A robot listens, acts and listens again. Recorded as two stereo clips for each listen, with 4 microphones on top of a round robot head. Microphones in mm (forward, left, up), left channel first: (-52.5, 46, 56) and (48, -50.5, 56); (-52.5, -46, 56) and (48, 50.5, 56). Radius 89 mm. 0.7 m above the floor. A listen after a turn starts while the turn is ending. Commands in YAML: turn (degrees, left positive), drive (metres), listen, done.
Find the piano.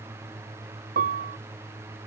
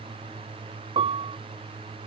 turn: -10
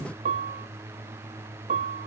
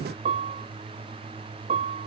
done: "Found it: a piano, straight ahead."